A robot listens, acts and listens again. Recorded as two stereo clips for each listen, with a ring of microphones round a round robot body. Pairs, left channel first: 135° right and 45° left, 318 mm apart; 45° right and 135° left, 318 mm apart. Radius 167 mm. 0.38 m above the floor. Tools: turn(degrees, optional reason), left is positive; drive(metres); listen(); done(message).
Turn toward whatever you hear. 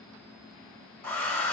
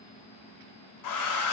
turn(degrees=-50, reason="The hair dryer: 50° right.")
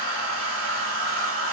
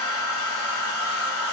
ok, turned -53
done("Found it: a hair dryer, straight ahead.")